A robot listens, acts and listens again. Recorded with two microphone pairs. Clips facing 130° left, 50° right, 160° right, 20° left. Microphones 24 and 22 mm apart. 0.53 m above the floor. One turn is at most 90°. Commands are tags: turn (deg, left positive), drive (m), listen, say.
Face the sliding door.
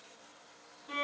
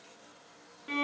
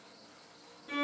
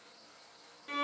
<listen/>
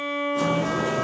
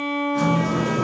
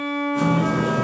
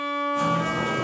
<turn deg="-90"/>
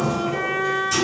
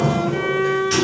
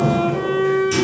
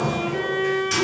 <turn deg="-20"/>
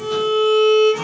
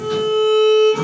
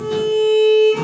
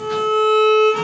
<listen/>
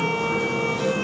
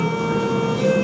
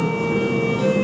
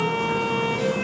<say>Found it: a sliding door, straight ahead.</say>